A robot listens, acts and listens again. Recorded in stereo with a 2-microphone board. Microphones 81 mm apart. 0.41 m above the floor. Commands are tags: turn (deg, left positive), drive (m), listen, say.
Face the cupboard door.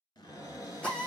<turn deg="45"/>
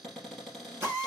<say>Found it: a cupboard door, straight ahead.</say>